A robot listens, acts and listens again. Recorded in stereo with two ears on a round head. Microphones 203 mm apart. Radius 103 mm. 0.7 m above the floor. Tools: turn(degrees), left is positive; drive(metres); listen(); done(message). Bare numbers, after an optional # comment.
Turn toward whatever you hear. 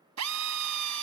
turn(-90)
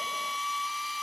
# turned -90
done("Found it: a drill, straight ahead.")